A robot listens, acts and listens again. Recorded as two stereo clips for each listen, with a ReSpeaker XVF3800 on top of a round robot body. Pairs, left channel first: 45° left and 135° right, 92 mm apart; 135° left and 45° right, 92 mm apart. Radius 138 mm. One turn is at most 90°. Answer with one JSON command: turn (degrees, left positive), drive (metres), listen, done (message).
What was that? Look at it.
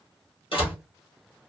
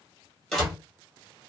{"turn": 50}
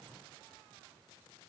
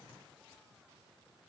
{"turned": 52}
{"done": "Facing where the door slam came from. I can't hear it now."}